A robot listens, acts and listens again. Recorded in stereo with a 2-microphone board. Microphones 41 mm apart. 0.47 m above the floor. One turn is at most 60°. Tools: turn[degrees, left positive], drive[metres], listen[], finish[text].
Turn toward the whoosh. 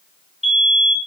Action: listen[]
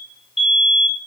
Action: listen[]
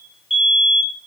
Action: finish[I can't make out a whoosh, only a fire alarm.]